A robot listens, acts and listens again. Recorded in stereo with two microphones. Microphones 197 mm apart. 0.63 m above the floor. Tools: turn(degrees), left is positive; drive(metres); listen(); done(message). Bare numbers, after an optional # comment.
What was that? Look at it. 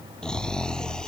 turn(30)
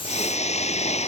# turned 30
# So it is at 145° left.
turn(145)
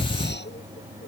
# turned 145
# The snoring is now 60° left.
turn(60)
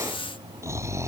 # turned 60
# The snoring is now 15° right.
turn(-15)
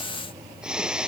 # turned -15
done("Found it: snoring, straight ahead.")